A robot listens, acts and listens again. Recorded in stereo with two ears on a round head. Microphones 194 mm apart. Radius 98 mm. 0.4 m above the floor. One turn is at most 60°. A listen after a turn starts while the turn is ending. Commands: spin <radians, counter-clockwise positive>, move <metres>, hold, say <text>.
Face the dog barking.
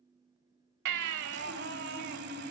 hold
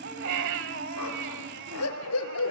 spin 1.05
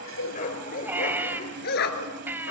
spin 0.96
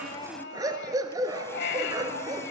spin -0.35
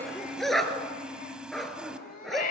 say Facing the dog barking, 1 to 2 m away.